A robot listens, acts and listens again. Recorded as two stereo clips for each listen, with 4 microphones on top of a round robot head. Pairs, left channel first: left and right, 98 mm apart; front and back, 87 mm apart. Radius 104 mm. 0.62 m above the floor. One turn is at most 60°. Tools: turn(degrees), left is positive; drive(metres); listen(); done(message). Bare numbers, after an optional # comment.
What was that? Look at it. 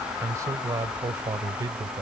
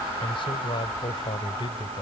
# The man speaking: 35° right.
turn(-35)
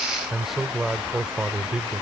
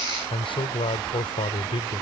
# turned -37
# The man speaking is now 10° right.
turn(-10)
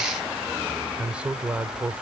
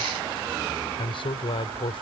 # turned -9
# The man speaking is now 15° right.
turn(-15)
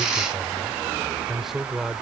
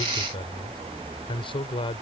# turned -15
done("Facing the man speaking.")